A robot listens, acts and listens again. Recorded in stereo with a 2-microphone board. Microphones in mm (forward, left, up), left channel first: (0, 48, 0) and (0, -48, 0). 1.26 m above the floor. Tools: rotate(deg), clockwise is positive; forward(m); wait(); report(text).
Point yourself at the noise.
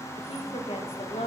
rotate(-70)
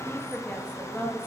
rotate(-20)
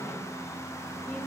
wait()
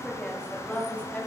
rotate(-10)
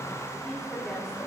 rotate(-10)
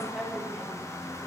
report("Facing the woman speaking, over 4 m away.")